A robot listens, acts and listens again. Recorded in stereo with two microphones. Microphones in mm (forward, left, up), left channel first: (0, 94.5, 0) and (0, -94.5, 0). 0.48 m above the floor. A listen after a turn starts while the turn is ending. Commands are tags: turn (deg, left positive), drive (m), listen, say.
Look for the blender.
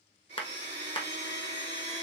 <turn deg="-65"/>
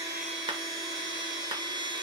<turn deg="-25"/>
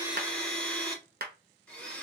<say>Facing the blender, 1 to 2 m away.</say>